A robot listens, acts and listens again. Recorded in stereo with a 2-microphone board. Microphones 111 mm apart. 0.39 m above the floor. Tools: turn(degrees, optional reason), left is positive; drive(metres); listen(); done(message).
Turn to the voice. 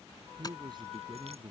turn(degrees=-40, reason="The man speaking: about 40° right or 140° right.")
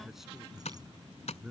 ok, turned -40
done("Found it: a man speaking, straight ahead.")